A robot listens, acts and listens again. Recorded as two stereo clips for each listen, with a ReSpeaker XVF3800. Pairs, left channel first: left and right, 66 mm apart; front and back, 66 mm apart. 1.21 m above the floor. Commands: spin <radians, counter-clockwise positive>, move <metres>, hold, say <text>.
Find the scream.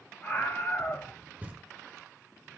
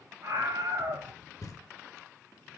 spin 2.62
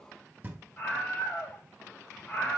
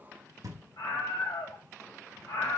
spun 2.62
spin 0.35
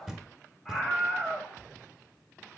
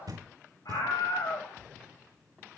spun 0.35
say Facing the scream, over 4 m away.